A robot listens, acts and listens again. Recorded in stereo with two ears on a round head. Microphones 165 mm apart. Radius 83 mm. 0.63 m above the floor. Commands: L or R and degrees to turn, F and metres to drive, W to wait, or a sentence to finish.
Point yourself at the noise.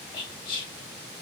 L25
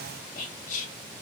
L125
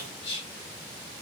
L35
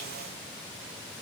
W
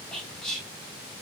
Found it: whispering, straight ahead.